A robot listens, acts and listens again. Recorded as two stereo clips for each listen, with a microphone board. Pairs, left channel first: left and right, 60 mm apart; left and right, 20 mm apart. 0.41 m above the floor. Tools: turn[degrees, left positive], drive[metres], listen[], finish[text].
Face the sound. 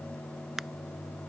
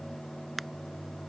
Action: turn[-30]
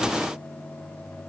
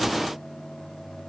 Action: listen[]
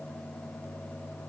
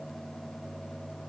Action: finish[I heard a crack, but can't make it out now. It was about 25° left or 145° right.]